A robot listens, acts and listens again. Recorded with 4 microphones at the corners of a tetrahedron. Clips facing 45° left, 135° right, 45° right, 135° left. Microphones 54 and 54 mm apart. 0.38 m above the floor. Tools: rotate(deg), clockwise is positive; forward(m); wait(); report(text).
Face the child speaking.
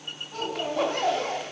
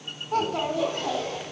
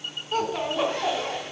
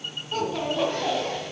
rotate(130)
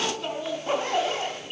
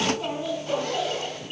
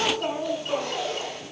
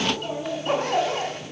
rotate(70)
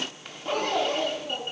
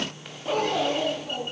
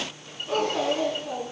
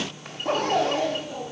rotate(50)
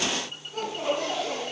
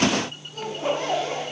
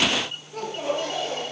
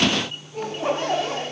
rotate(20)
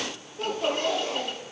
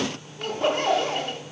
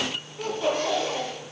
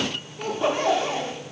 report("Facing the child speaking, 2 to 4 m away.")